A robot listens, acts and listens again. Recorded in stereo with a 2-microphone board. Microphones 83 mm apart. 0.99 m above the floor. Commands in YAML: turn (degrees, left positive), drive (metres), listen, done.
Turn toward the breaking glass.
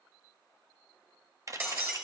turn: -25
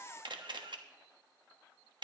listen: true
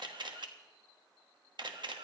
done: "I heard breaking glass, but can't make it out now. It was about straight ahead or 130° right."